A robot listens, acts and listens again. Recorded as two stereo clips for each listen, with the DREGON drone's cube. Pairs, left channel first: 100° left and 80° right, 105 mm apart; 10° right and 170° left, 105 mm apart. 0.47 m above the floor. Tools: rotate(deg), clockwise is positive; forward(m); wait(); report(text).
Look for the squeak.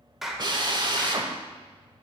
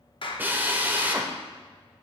wait()
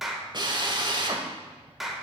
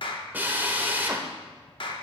wait()
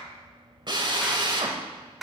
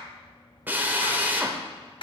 report("I can't make out a squeak, only a clap and a drill.")